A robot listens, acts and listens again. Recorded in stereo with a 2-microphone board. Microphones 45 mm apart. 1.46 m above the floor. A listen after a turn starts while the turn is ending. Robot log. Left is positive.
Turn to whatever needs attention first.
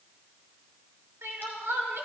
note: The crying: about 75° right or 105° right.
cmd yaw -75
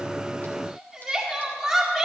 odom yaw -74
end: Facing the crying.